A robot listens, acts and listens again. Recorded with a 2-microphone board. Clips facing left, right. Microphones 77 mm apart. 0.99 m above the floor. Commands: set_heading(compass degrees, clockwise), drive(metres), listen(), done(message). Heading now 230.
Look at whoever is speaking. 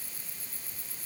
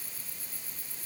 listen()
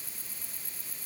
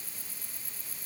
listen()
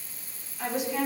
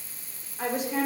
set_heading(275)
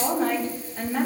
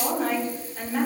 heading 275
done("Found it: a woman speaking, straight ahead.")